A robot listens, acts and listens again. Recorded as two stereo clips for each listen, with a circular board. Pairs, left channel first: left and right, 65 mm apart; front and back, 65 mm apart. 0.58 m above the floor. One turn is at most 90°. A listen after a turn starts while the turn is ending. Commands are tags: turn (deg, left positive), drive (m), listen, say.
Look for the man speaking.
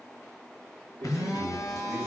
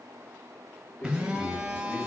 <turn deg="-55"/>
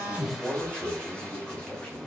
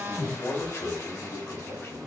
<turn deg="20"/>
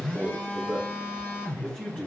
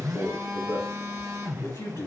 <say>Facing the man speaking, 2 to 4 m away.</say>